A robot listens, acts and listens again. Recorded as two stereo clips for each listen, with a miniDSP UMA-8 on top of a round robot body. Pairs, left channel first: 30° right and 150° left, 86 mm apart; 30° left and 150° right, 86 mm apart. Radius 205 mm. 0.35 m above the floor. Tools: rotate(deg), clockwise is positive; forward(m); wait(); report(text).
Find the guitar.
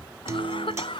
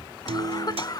rotate(155)
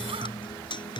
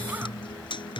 report("Found it: a guitar, straight ahead.")